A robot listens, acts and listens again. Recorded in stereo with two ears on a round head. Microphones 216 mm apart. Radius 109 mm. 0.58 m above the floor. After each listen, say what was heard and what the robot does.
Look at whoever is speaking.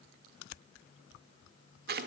Keep listening.
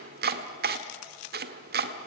Keep listening.
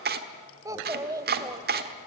Turn 30° right.
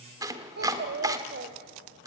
So it is at 135° right. Turn 135° right.
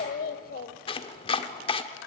The child speaking is now 35° left. Turn 35° left.
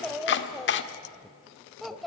Found it: a child speaking, straight ahead.